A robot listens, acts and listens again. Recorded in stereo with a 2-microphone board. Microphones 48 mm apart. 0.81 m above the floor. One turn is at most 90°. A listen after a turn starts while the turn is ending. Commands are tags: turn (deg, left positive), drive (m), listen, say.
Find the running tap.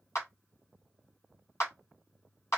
<listen/>
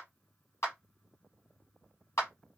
<listen/>
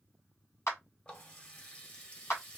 <turn deg="25"/>
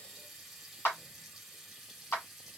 <say>Found it: a running tap, straight ahead.</say>